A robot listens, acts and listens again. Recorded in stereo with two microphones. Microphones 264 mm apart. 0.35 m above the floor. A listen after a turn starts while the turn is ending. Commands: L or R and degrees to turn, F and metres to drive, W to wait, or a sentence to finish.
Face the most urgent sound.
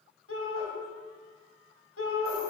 L60
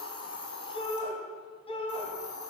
L25
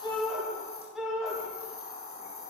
Found it: a shout, straight ahead.